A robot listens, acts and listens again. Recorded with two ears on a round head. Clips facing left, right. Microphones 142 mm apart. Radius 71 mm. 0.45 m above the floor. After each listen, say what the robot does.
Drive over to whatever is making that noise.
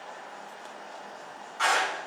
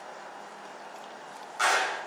Turn 60° right.
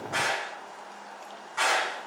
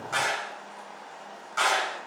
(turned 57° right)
Turn 60° right.
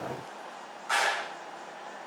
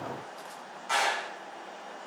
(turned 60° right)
Drive 1.0 m forward.
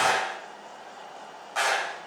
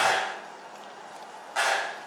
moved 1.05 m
Drive 1.0 m forward.
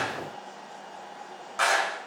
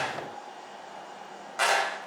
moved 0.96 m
Drive 1.0 m forward.
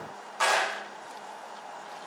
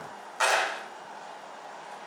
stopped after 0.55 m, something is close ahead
Arrived at the clap, straight ahead.